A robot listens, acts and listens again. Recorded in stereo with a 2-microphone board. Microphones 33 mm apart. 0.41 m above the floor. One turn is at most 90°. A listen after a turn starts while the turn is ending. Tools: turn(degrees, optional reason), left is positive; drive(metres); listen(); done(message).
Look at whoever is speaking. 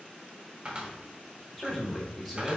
turn(degrees=30)
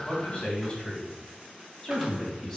turn(degrees=30)
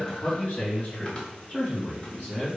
turn(degrees=90, reason="So it is at 150° left.")
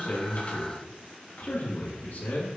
turn(degrees=55, reason="The man speaking is now 55° left.")
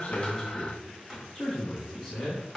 done("Found it: a man speaking, straight ahead, 2 to 4 m away.")